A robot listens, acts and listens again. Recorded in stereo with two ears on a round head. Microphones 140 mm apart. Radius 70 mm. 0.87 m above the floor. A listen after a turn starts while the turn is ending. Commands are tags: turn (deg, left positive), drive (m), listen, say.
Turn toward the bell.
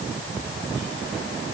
<listen/>
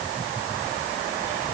<listen/>
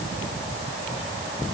<say>I can't make out a bell to turn to.</say>